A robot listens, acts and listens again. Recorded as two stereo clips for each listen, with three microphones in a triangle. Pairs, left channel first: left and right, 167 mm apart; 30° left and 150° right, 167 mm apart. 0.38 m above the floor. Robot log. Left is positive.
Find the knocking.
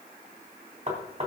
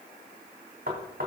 note: The knocking: 135° right.
cmd yaw -135
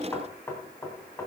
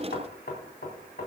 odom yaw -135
note: The knocking is now 20° left.
cmd yaw +20
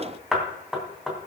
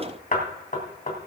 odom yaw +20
end: Facing the knocking, 2 to 4 m away.